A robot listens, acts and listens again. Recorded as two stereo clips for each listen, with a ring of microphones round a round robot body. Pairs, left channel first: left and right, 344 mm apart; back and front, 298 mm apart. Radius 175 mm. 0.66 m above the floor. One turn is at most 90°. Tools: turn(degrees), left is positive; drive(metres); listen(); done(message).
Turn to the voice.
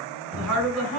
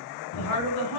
turn(degrees=-90)
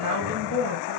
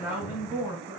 turn(degrees=-85)
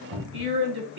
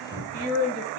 turn(degrees=-30)
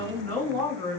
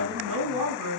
done("Facing the woman speaking, 2 to 4 m away.")